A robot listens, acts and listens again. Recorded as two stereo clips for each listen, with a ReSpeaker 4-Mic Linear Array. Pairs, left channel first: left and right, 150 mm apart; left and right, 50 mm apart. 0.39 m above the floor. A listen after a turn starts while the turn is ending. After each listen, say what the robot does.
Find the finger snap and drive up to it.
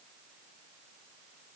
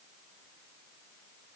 Keep listening.
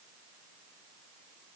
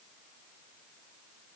Keep listening.
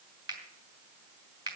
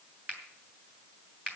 Turn 30° right.
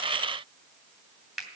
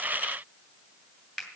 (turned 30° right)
Drive 1.0 m forward.
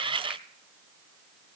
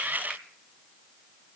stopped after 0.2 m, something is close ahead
Keep listening.
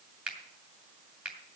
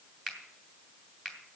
Blocked. The finger snap is further on, straight ahead.